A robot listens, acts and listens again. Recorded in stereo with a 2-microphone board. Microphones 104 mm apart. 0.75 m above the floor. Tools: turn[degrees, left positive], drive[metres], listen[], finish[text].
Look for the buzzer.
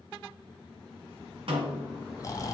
Action: listen[]
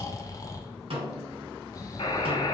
Thought: The buzzer: about 60° left or 120° left.
Action: turn[60]
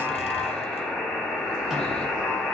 Action: finish[Facing the buzzer, 1 to 2 m away.]